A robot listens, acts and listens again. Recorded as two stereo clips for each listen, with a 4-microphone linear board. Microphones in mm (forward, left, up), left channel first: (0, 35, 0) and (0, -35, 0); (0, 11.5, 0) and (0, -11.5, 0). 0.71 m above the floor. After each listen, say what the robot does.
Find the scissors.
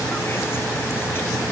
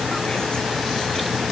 Keep listening.
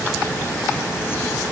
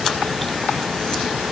Keep listening.
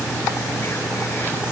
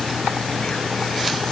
I can't make out scissors to turn to.